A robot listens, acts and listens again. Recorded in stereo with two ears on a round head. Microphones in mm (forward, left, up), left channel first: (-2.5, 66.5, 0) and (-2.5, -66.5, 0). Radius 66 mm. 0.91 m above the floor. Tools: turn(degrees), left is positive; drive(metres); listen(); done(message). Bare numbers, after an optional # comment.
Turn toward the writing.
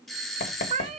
# The writing: about 60° left or 120° left.
turn(60)
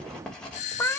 done("Found it: writing, straight ahead, 2 to 4 m away.")